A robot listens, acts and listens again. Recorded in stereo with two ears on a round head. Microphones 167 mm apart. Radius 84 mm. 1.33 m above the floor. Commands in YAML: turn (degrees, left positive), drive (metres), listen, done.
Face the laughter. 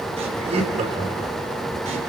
turn: -35
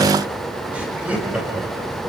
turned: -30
done: "Facing the laughter."